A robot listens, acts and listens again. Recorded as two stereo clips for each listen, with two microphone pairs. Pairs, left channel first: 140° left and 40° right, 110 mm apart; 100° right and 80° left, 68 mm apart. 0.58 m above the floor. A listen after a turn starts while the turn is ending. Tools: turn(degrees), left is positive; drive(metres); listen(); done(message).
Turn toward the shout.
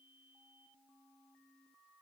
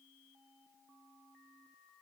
listen()
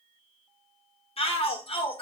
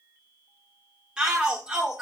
turn(degrees=155)
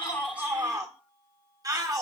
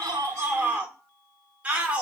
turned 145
turn(degrees=10)
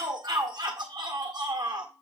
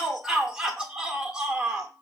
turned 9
done("Facing the shout, 1 to 2 m away.")